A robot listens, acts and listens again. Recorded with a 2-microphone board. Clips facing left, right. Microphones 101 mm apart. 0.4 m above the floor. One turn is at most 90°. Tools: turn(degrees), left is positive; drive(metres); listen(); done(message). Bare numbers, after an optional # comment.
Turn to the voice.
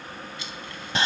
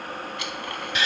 listen()
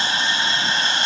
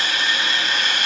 listen()
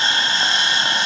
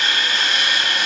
done("I can't make out anyone speaking, only sawing.")